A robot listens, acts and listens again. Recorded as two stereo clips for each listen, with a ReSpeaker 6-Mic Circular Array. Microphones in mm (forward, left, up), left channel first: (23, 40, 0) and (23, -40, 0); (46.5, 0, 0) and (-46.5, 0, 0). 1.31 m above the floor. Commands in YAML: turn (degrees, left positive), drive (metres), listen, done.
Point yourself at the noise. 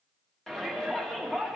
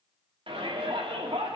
turn: 175
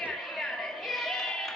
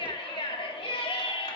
done: "Facing the shout, 2 to 4 m away."